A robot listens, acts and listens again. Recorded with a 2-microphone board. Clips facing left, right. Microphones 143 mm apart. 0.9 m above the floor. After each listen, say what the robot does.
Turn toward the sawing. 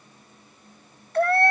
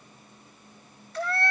Keep listening.
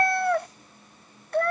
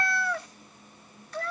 Keep listening.
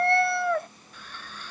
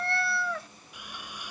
Turn 30° right.
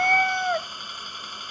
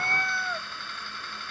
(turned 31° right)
Turn 15° left.
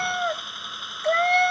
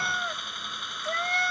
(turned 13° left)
Found it: sawing, straight ahead.